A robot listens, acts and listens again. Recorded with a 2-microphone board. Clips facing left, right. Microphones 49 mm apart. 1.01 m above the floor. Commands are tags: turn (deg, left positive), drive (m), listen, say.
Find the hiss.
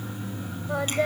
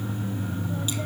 <listen/>
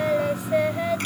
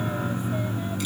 <listen/>
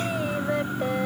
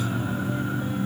<say>I can't make out a hiss to turn to.</say>